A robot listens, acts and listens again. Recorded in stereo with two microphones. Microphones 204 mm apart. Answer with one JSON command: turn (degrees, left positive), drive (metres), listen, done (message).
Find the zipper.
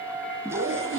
{"turn": -90}
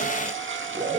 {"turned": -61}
{"turn": -35}
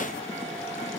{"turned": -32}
{"listen": true}
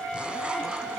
{"done": "Found it: a zipper, straight ahead, 1 to 2 m away."}